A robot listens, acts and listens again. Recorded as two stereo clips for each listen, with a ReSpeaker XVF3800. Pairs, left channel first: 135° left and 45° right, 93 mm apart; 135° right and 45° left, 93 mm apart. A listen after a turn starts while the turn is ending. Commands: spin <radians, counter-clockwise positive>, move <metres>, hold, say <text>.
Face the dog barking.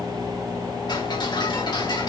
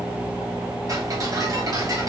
hold
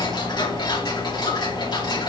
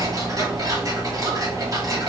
hold
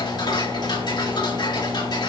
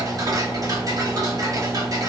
say I can't make out a dog barking to turn to.